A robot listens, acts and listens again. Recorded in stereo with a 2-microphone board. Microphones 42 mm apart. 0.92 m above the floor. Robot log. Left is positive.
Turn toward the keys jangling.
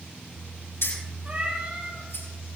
cmd yaw +90
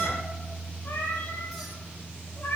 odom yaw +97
cmd idle
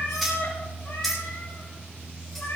end: Found it: keys jangling, straight ahead.